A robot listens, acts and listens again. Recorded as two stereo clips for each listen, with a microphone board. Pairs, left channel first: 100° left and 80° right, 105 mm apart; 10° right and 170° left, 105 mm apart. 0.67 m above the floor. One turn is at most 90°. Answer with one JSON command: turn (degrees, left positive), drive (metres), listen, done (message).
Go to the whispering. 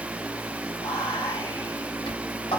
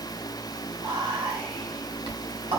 {"turn": 90}
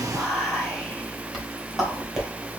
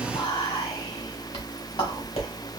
{"turn": 10}
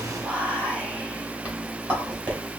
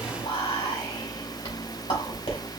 {"drive": 1.0}
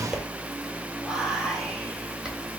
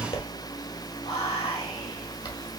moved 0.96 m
{"drive": 1.0}
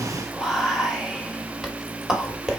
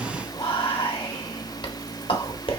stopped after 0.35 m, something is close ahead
{"done": "I am next to the whispering."}